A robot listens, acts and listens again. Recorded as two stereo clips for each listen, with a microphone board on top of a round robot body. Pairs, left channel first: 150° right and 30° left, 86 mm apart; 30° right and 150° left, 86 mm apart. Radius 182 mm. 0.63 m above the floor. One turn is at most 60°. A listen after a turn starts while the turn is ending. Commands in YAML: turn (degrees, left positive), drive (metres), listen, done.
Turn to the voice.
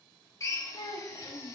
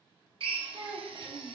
turn: 60
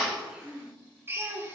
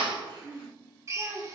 turn: 60
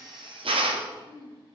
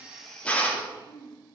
turn: 15
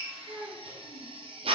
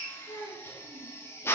done: "Found it: a child speaking, straight ahead."